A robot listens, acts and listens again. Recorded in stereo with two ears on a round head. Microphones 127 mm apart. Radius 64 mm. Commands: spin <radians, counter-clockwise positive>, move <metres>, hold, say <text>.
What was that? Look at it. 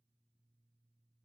hold
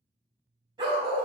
spin -0.61
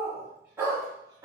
spin -0.44
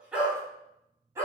spin -0.35
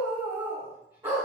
spin -0.35
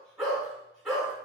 say Facing the dog barking.